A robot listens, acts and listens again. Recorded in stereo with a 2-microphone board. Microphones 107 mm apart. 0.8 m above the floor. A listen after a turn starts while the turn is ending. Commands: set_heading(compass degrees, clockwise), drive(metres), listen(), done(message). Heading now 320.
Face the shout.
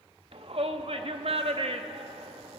set_heading(25)
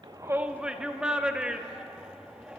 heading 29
set_heading(39)
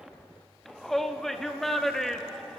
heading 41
done("Found it: a shout, straight ahead.")